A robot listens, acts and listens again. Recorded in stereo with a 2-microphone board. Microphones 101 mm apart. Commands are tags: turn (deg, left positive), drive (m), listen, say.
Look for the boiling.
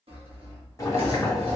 <turn deg="35"/>
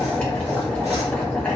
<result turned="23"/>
<turn deg="10"/>
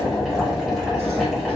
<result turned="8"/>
<say>Found it: boiling, straight ahead, 1 to 2 m away.</say>